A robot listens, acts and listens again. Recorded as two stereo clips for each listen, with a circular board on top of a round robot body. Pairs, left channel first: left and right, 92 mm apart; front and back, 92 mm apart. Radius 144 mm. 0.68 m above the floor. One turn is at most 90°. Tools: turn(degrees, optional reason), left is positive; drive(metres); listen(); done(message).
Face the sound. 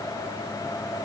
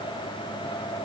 listen()
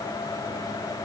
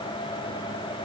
listen()
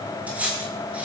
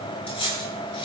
turn(degrees=-15, reason="The cutlery clinking: 15° right.")
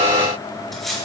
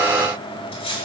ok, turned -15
done("Found it: cutlery clinking, straight ahead.")